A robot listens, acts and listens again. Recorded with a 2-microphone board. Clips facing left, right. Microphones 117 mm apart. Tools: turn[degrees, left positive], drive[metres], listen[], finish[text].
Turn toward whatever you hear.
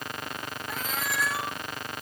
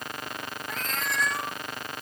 Action: turn[30]
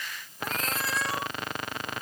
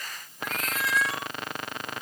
Thought: So it is at 145° left.
Action: turn[145]
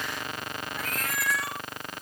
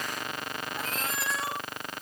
Thought: The cat meowing is now 25° right.
Action: turn[-25]
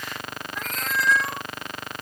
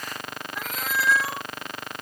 Action: finish[Facing the cat meowing.]